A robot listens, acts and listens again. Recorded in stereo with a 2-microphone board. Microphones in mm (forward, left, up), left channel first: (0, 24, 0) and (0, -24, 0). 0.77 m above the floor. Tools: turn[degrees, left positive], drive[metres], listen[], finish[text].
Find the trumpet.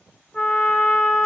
Thought: The trumpet: about 15° left or 165° left.
Action: turn[15]
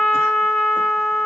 Action: finish[Facing the trumpet, under 1 m away.]